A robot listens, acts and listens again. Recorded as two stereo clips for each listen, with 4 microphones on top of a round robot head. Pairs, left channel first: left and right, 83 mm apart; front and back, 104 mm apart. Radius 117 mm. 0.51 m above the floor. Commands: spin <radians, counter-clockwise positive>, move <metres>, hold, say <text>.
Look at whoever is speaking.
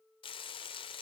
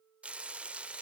hold
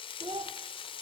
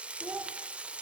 spin -1.92
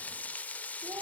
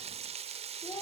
hold
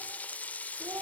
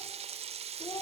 spin -0.79
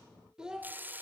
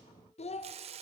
spin -0.17
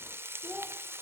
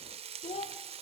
say Found it: a child speaking, straight ahead, 1 to 2 m away.